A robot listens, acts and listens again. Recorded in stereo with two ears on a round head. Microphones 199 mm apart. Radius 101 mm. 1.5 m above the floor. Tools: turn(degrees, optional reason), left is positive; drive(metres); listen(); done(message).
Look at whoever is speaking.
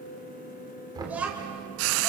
turn(degrees=-30)
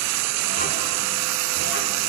listen()
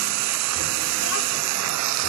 listen()
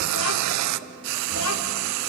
turn(degrees=70, reason="So it is at 70° left.")
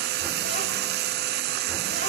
listen()
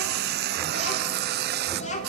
turn(degrees=30, reason="The child speaking is now 30° left.")
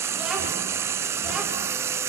listen()
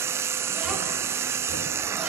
listen()
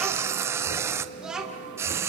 done("Found it: a child speaking, straight ahead, 2 to 4 m away.")